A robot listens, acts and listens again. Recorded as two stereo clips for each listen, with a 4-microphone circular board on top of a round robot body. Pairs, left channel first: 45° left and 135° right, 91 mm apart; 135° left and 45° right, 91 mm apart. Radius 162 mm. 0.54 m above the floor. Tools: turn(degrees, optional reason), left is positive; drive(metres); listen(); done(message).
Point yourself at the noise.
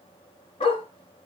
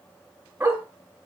turn(degrees=30, reason="The dog barking: 30° left.")
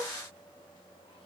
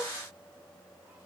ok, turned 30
listen()
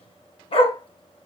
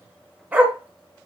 turn(degrees=30, reason="The dog barking is now 30° left.")
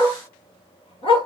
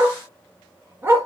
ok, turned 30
turn(degrees=20, reason="The dog barking is now 20° left.")
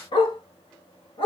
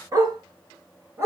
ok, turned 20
turn(degrees=15, reason="The dog barking is now 15° left.")
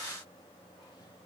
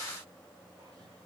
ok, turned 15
listen()
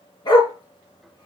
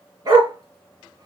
done("Found it: a dog barking, straight ahead.")